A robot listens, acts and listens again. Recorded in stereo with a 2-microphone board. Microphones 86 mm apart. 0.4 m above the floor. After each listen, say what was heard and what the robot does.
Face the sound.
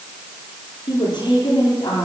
The woman speaking: about 55° left or 125° left. Turn 55° left.
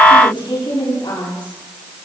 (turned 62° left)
So it is at 65° left. Turn 65° left.
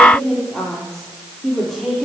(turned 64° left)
Found it: a woman speaking, straight ahead, over 4 m away.